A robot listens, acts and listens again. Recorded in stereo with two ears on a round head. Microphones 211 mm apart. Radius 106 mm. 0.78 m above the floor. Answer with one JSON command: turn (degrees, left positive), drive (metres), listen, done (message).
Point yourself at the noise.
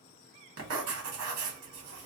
{"turn": -70}
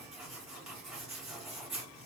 {"done": "Found it: writing, straight ahead, 1 to 2 m away."}